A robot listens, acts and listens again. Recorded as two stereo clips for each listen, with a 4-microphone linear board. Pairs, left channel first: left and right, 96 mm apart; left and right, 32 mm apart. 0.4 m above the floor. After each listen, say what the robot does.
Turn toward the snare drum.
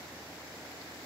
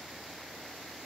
Keep listening.
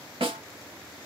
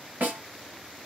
Turn 70° right.
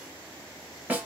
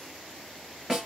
Turn 15° right.
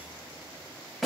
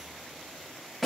Facing the snare drum, 1 to 2 m away.